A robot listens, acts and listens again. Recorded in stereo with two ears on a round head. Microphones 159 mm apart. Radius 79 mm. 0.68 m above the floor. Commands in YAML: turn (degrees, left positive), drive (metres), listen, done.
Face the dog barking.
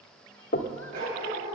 turn: -55
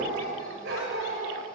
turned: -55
turn: -60
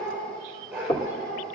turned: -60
done: "Facing the dog barking."